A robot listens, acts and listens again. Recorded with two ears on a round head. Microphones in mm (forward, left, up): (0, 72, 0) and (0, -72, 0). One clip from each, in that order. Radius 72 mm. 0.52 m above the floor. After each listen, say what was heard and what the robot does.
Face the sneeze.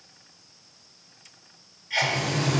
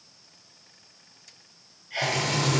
The sneeze: about 55° left or 125° left. Turn 55° left.
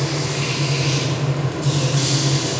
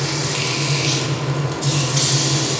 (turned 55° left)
Keep listening.
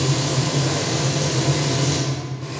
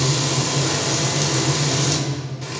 I heard a sneeze, but can't make it out now. It was about straight ahead or 70° left.